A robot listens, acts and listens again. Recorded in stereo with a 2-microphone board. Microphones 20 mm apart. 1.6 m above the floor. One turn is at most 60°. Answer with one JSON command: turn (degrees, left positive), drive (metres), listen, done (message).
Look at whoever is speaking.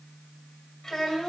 {"turn": 30}
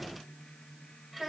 {"done": "Found it: a child speaking, straight ahead, 2 to 4 m away."}